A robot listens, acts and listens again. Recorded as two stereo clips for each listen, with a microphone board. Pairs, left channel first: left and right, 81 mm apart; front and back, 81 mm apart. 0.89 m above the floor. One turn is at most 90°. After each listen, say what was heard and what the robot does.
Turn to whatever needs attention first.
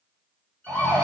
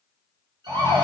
The siren: 175° right. Turn 90° right.
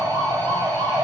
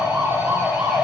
The siren is now 100° right. Turn 90° right.
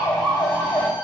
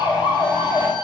The siren is now 10° left. Turn 10° left.
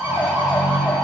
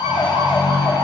Found it: a siren, straight ahead.